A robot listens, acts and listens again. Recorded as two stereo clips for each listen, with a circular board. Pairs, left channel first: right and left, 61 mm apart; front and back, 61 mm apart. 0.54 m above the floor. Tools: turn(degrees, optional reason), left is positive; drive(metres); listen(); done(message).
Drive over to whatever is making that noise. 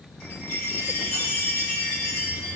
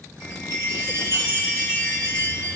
turn(degrees=-155, reason="The chime: 155° right.")
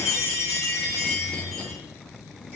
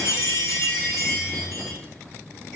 turn(degrees=25, reason="The chime is now 25° left.")
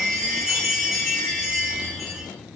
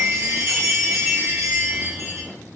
drive(metres=1.0)
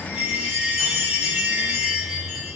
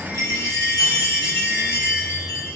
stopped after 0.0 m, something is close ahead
turn(degrees=10, reason="The chime is now 10° left.")
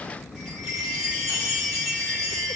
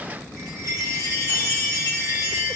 done("Something is in my way. I am facing the chime but have not reached it.")